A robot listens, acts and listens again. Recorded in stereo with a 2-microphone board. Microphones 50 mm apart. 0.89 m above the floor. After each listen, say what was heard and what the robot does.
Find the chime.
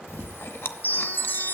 The chime: about 55° left or 125° left. Turn 55° left.
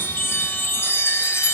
So it is at 70° left. Turn 70° left.
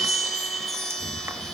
Found it: a chime, straight ahead.